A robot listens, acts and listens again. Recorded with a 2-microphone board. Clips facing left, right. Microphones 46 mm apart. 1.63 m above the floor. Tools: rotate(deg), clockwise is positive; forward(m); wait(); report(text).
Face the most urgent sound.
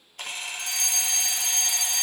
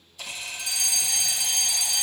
rotate(-55)
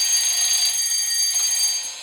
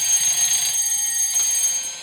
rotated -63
rotate(-55)
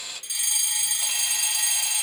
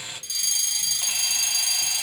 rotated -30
rotate(-25)
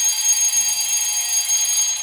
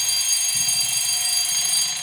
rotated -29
report("Found it: a fire alarm, straight ahead, 1 to 2 m away.")